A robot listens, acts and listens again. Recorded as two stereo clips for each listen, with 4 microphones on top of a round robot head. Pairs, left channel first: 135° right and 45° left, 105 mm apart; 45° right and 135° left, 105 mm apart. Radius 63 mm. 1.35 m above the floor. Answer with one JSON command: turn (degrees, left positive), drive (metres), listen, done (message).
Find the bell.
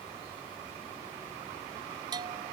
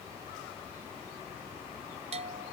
{"turn": 100}
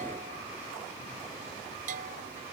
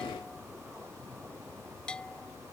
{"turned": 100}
{"turn": 35}
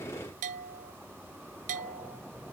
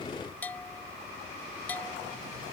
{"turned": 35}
{"turn": 30}
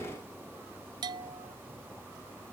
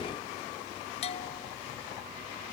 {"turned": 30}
{"turn": -10}
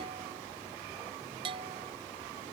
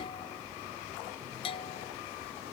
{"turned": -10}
{"done": "Found it: a bell, straight ahead."}